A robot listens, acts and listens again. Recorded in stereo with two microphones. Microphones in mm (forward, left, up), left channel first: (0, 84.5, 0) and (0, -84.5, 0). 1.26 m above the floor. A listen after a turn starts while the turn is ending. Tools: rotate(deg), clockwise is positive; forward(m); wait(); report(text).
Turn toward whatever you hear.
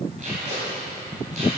rotate(45)
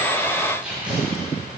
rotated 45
report("Found it: tape being pulled, straight ahead, 2 to 4 m away.")